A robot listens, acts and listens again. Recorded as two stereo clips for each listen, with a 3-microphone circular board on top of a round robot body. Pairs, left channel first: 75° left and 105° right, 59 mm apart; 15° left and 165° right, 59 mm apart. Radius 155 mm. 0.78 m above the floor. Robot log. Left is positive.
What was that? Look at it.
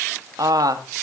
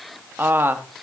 note: The woman speaking: 110° right.
cmd yaw -110
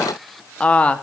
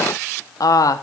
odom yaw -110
end: Facing the woman speaking.